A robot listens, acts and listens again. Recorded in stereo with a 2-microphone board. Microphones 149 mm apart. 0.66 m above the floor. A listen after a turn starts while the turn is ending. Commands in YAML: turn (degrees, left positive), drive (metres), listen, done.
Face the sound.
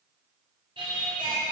turn: -40
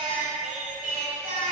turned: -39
turn: -110
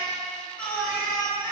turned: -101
turn: 10
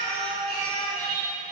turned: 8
done: "Found it: singing, straight ahead, 2 to 4 m away."